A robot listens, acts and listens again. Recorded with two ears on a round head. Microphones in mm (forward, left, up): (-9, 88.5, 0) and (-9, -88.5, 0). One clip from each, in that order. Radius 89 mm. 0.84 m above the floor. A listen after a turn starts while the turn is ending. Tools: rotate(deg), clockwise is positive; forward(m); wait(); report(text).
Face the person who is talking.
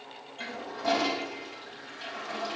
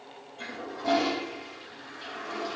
wait()
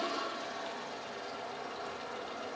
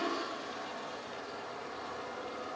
wait()
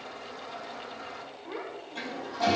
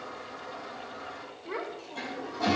rotate(35)
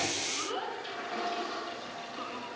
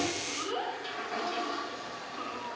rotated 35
report("Facing the child speaking.")